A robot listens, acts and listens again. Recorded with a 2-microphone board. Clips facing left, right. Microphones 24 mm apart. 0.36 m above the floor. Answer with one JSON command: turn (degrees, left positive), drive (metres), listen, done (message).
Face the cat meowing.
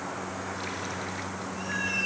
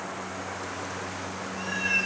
{"turn": -30}
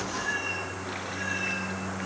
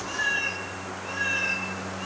{"turn": -150}
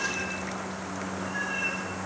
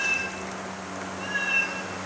{"turn": -60}
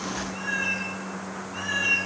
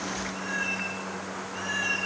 {"turn": 15}
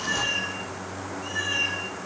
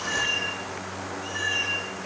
{"done": "Facing the cat meowing, over 4 m away."}